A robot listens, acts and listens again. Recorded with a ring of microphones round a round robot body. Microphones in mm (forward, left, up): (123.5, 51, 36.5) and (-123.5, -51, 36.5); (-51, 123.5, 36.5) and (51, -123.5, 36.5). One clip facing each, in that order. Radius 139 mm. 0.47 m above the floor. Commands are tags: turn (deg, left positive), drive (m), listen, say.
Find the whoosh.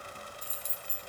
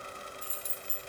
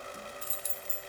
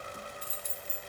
<listen/>
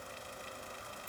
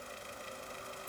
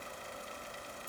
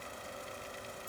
<listen/>
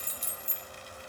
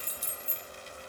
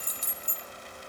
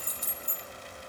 <say>I can't make out a whoosh, only keys jangling.</say>